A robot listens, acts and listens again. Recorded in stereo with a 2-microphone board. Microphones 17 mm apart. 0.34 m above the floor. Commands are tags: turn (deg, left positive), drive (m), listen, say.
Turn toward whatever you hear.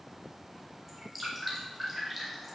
<turn deg="-30"/>
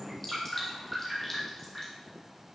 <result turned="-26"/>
<turn deg="20"/>
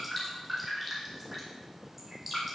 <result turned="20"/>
<say>Found it: dripping, straight ahead.</say>